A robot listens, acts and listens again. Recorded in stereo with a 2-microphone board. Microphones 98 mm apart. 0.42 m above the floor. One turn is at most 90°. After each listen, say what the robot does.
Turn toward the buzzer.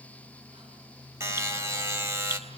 Turn 25° right.
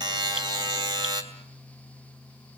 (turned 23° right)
Turn 90° right.
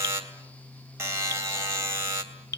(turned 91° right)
Turn 30° right.
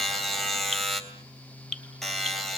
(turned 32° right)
Found it: a buzzer, straight ahead.